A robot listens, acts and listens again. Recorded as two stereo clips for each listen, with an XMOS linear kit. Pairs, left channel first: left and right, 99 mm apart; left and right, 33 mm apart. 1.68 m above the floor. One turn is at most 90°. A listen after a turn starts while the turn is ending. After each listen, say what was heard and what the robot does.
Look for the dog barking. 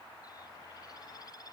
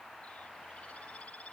Keep listening.
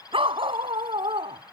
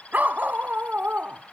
The dog barking: about 70° right or 110° right. Turn 70° right.
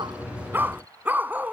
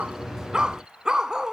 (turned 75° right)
So it is at 15° right. Turn 15° right.
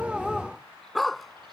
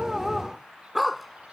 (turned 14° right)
Facing the dog barking.